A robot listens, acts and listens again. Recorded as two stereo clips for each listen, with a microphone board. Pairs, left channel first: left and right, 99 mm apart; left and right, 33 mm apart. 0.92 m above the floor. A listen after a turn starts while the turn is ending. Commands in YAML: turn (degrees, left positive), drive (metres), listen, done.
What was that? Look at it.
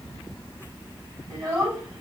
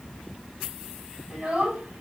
turn: -30
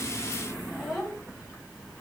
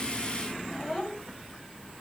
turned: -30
done: "Facing the child speaking, over 4 m away."